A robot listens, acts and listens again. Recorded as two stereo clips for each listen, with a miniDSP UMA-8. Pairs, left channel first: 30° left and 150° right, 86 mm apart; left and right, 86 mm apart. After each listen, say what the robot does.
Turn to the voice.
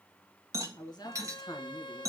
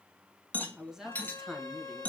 Found it: a man speaking, straight ahead.